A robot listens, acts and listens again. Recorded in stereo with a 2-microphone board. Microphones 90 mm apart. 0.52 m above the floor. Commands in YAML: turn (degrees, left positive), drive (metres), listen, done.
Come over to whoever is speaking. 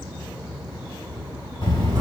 turn: 65
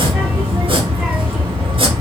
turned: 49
turn: 20
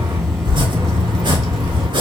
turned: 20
drive: 1.0
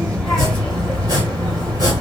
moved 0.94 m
drive: 1.0
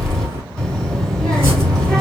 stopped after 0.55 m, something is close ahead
turn: 10
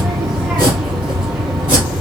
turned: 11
done: "I am next to the child speaking."